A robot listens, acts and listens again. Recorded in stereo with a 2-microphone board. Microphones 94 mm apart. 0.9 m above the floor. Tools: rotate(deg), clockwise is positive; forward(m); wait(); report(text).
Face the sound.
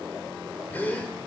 rotate(-20)
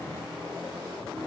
wait()
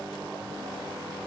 report("I heard a gasp, but can't make it out now. It was about straight ahead or 140° left.")